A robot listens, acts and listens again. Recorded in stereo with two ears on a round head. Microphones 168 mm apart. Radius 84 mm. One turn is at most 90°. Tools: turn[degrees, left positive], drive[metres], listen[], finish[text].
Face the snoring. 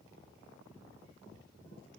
Action: listen[]
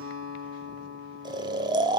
Thought: The snoring: about 25° right or 155° right.
Action: turn[-25]
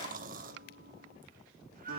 Thought: So it is at 135° right.
Action: turn[-90]
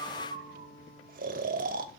Thought: The snoring is now 45° right.
Action: turn[-45]
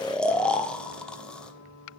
Action: finish[Facing the snoring, 1 to 2 m away.]